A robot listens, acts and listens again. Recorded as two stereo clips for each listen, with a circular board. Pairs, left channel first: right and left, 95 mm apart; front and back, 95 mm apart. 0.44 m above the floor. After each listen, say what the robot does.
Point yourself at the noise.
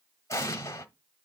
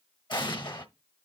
Turn 35° right.
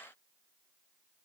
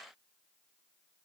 I heard an explosion from this way, but can't make it out now.